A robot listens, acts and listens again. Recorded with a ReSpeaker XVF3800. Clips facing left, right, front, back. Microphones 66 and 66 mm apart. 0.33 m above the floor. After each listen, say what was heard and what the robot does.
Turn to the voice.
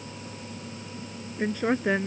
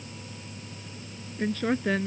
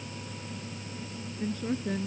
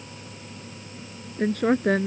The woman speaking: 165° left. Turn 165° left.
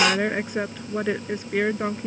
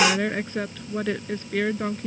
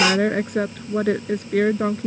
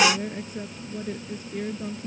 The woman speaking is now 15° left. Turn 15° left.
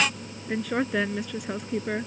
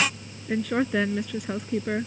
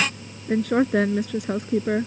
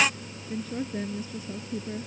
Found it: a woman speaking, straight ahead.